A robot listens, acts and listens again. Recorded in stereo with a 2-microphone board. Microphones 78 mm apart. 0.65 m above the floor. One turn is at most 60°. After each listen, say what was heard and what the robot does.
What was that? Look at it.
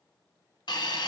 The hiss: about 70° left or 110° left. Turn 60° left.
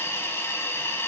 So it is at 35° left. Turn 35° left.
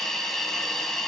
Found it: a hiss, straight ahead.